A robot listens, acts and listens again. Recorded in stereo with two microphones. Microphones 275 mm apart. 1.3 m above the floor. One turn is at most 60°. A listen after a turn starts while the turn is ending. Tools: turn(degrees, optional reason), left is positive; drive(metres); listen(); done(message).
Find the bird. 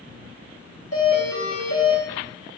listen()
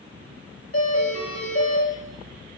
listen()
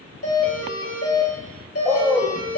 turn(degrees=30)
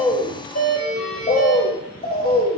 turn(degrees=60, reason="So it is at 145° left.")
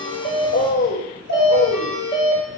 turn(degrees=60, reason="The bird is now 80° left.")
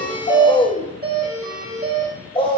turn(degrees=20, reason="The bird is now 20° left.")
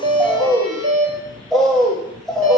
done("Facing the bird, 1 to 2 m away.")